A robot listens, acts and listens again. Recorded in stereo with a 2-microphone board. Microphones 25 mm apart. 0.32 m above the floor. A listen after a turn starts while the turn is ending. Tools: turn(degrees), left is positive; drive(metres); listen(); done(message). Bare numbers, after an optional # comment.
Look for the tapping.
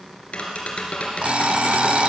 # The tapping: about 55° left or 125° left.
turn(55)
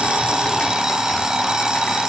listen()
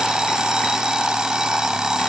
listen()
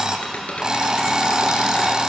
# So it is at 70° left.
turn(70)
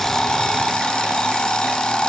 listen()
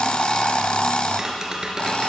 # The tapping is now 25° right.
turn(-25)
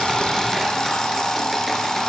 listen()
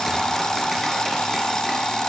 listen()
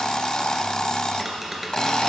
done("Facing the tapping, 2 to 4 m away.")